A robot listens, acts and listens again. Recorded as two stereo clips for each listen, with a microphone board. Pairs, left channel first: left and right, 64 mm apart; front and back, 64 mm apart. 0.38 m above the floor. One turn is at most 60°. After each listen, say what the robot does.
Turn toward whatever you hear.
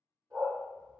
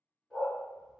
Turn 60° right.
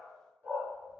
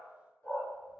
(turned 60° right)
Turn 40° right.
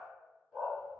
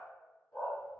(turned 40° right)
Turn 15° right.
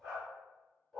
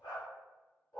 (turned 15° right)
Found it: a dog barking, straight ahead.